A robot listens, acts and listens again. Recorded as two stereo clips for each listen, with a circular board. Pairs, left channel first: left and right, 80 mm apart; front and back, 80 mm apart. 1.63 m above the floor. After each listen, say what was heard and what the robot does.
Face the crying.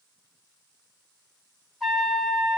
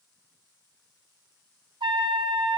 Keep listening.
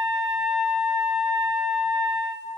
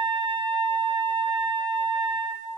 Keep listening.
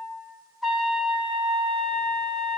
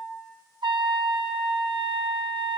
I can't make out crying, only a trumpet.